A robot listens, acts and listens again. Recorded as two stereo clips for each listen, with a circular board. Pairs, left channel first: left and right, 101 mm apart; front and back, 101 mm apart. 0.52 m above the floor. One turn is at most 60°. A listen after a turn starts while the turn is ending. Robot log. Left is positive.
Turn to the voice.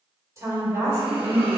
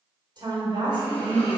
note: The woman speaking: 145° right.
cmd yaw -60
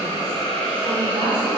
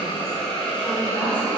note: Nothing new. It was at 85° right.
cmd yaw -60
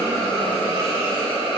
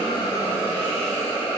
note: Nothing new. It was at 25° right.
cmd yaw -25
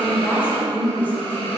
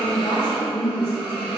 note: The woman speaking is now 20° left.
cmd yaw +20
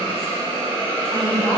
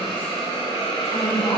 cmd idle
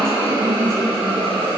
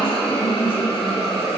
end: Found it: a woman speaking, straight ahead.